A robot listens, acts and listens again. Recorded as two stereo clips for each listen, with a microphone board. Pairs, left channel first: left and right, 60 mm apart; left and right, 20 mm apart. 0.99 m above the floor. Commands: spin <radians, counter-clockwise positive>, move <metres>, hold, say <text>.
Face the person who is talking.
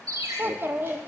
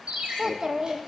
spin -0.61
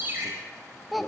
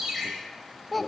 say Facing the child speaking.